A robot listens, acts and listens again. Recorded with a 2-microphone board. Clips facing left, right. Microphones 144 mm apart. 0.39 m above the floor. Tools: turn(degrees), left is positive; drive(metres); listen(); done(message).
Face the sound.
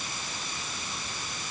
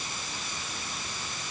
listen()
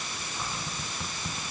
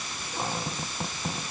turn(degrees=-55)
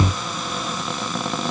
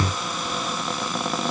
done("Facing the cupboard door.")